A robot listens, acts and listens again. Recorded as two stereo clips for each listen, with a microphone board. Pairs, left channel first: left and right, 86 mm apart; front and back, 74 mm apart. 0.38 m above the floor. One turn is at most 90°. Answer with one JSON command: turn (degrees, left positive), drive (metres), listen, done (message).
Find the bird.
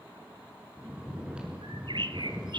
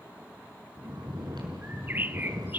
{"turn": -90}
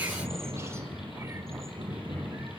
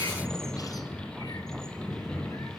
{"turn": -25}
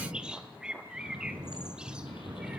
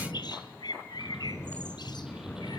{"turn": -10}
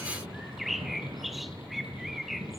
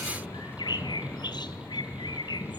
{"done": "Found it: a bird, straight ahead, 1 to 2 m away."}